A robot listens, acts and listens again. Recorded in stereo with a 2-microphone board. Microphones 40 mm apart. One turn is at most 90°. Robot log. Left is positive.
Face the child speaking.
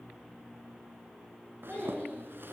note: The child speaking: about 45° left or 135° left.
cmd yaw +45
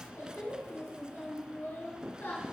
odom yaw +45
note: So it is at 80° left.
cmd yaw +80
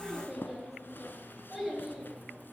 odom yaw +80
note: The child speaking is now 10° right.
cmd yaw -10
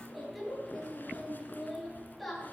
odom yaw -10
end: Facing the child speaking, over 4 m away.